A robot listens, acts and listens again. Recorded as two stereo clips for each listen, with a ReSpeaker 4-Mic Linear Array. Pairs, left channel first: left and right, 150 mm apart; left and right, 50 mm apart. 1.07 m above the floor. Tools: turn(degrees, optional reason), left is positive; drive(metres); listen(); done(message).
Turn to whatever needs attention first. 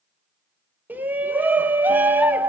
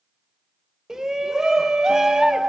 turn(degrees=-30)
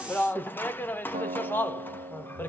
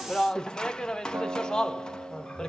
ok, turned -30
turn(degrees=15, reason="So it is at 15° left.")
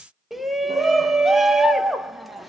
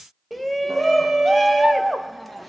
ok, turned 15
done("Facing the shout.")